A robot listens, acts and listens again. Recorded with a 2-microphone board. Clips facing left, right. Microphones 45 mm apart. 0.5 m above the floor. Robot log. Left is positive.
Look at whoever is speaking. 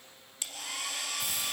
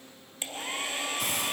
cmd idle
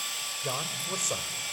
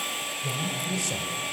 note: The man speaking: about 45° left or 135° left.
cmd yaw +45
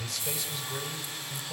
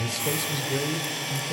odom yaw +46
note: So it is at 15° right.
cmd yaw -15
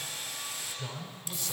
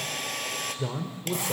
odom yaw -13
note: The man speaking is now 25° right.
cmd yaw -25
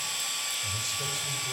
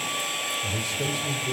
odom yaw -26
note: The man speaking is now 10° right.
cmd yaw -10
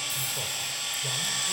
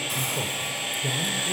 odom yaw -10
end: Facing the man speaking.